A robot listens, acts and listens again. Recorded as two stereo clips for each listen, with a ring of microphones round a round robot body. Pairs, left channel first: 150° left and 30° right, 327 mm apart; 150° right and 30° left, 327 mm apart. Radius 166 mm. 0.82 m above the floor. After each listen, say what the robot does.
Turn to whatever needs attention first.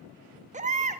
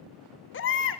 Turn 100° right.
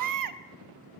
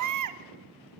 Found it: a baby crying, straight ahead.